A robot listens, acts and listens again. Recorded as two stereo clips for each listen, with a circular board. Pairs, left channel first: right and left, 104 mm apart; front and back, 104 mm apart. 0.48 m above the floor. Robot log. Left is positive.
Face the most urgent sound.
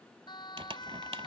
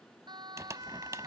note: The siren: 135° right.
cmd yaw -135
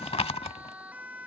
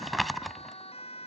note: The siren is now 15° left.
cmd yaw +15
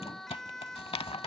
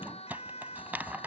end: Facing the siren.